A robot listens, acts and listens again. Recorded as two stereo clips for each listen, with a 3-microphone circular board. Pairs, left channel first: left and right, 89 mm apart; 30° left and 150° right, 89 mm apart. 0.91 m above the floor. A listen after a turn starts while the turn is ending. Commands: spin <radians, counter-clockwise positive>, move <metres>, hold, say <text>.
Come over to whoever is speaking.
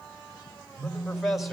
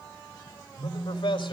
move 1.0
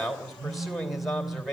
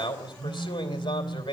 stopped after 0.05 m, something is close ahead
say Blocked. The man speaking is further on, straight ahead.